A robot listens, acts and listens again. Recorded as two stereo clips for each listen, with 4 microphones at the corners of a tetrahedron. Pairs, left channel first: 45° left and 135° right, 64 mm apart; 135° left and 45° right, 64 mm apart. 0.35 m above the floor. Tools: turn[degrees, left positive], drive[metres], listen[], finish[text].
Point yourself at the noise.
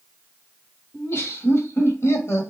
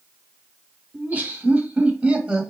Thought: The laughter: 25° left.
Action: turn[25]
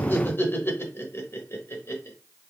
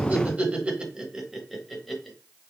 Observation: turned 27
Thought: The laughter is now 50° left.
Action: turn[50]
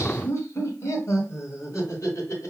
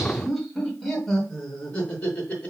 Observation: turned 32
Thought: The laughter is now 65° left.
Action: turn[65]
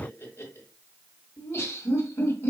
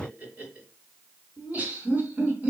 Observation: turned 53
Thought: The laughter is now 10° left.
Action: turn[10]
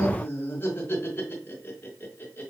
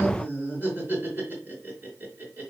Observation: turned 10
Action: finish[Found it: laughter, straight ahead.]